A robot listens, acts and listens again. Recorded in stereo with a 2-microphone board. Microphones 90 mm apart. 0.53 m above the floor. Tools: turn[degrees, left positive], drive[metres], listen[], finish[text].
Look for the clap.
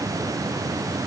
Action: listen[]
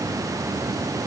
Action: listen[]
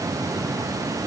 Action: finish[I can't make out a clap.]